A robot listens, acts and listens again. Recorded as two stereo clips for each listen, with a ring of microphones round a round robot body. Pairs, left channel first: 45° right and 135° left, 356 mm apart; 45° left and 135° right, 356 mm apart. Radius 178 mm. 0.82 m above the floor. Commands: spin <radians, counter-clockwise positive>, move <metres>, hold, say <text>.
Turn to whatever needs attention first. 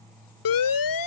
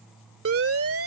spin -1.40
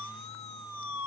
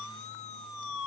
say Facing the siren.